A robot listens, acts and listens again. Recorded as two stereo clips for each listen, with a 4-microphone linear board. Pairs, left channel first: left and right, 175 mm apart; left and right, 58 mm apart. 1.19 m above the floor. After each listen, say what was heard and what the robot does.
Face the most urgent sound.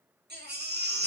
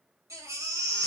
Turn 90° right.
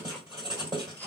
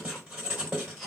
So it is at 10° left. Turn 10° left.
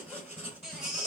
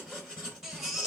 Found it: a baby crying, straight ahead.